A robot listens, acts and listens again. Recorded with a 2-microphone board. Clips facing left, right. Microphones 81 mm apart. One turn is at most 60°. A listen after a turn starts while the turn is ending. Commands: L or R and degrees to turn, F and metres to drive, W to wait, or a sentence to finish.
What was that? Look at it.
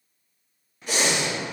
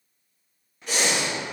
L30
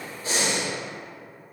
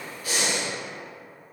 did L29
L60
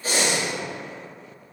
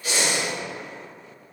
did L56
L60
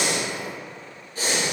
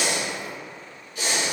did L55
L40
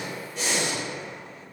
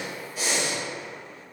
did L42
Facing the breathing.